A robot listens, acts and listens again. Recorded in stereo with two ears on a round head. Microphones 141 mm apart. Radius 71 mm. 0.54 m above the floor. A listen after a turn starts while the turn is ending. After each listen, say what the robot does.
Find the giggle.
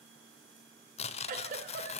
Turn 55° right.
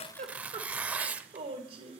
Turn 45° right.
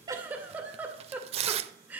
Turn 10° right.
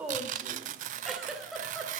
Found it: a giggle, straight ahead.